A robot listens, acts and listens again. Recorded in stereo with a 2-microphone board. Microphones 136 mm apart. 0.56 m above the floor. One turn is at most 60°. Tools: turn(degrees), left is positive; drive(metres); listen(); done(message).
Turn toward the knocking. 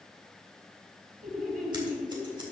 listen()
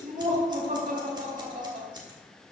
listen()
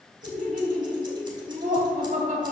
done("I can't make out knocking, only laughter and scissors.")